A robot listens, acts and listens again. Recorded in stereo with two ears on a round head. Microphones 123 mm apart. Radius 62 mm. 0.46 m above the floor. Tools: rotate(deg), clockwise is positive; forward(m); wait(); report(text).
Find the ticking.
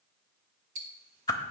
rotate(55)
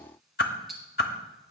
report("Facing the ticking.")